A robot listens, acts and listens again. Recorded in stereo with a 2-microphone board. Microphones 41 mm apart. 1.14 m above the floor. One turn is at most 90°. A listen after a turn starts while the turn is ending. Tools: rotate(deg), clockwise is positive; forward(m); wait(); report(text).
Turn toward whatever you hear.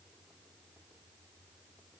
wait()
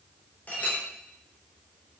rotate(-35)
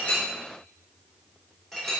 report("Found it: a clink, straight ahead, 2 to 4 m away.")